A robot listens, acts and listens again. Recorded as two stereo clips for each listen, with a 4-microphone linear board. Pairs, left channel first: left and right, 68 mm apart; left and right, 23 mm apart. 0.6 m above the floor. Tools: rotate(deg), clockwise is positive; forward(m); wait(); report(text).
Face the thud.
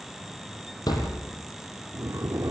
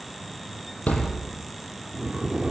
rotate(-90)
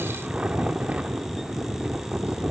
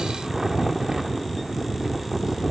report("Facing where the thud came from. I can't hear it now.")